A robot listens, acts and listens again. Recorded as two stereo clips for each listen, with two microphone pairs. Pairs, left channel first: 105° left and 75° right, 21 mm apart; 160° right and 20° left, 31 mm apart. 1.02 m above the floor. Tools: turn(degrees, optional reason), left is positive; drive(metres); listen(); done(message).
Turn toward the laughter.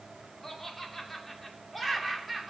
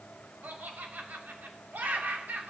turn(degrees=10, reason="The laughter: 10° left.")
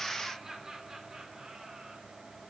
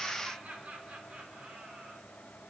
turn(degrees=-10, reason="The laughter is now 10° right.")
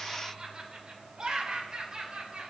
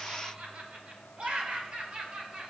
turn(degrees=-25, reason="The laughter is now 25° right.")
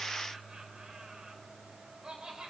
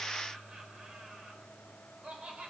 turn(degrees=-20, reason="The laughter is now 20° right.")
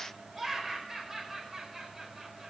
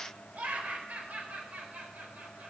turn(degrees=10, reason="The laughter is now 10° left.")
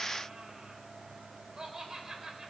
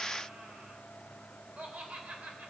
done("Facing the laughter, 2 to 4 m away.")